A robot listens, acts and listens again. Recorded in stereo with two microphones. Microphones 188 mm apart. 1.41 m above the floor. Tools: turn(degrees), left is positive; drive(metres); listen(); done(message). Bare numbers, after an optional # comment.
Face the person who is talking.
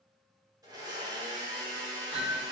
listen()
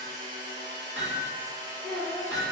# The child speaking: about 55° right or 125° right.
turn(-55)
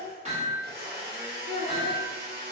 # So it is at 70° right.
turn(-70)
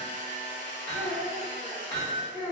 # The child speaking is now 15° right.
turn(-15)
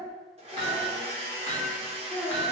done("Found it: a child speaking, straight ahead.")